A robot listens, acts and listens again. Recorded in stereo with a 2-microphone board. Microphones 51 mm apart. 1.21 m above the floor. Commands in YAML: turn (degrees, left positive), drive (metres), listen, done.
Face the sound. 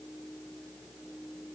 listen: true
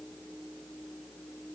listen: true
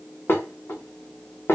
turn: 45
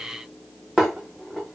done: "Found it: dishes clattering, straight ahead, 1 to 2 m away."